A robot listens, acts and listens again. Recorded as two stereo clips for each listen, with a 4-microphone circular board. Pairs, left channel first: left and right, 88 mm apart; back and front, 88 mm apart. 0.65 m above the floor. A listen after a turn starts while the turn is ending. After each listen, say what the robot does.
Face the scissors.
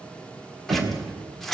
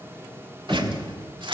Found it: scissors, straight ahead, 1 to 2 m away.